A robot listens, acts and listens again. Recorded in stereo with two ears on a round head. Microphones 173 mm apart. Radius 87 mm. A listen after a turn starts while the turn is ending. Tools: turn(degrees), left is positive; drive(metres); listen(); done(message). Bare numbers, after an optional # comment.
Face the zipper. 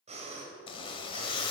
# The zipper: about 25° left or 155° left.
turn(25)
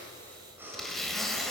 done("Found it: a zipper, straight ahead.")